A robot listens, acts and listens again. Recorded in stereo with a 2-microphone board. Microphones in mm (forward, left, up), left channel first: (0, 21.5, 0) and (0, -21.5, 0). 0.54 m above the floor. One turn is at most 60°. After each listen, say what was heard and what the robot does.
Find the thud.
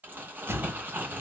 The thud: about 70° right or 110° right. Turn 60° right.
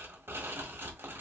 Keep listening.
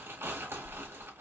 I heard a thud, but can't make it out now. It was about 10° right or 50° right.